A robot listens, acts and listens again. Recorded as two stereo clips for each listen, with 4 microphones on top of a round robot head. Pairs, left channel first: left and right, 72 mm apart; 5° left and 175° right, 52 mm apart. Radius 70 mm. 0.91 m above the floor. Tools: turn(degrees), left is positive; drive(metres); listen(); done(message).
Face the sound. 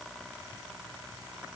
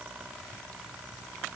listen()
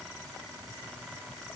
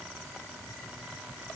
listen()
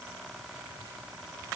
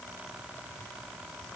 done("I can't make out anything.")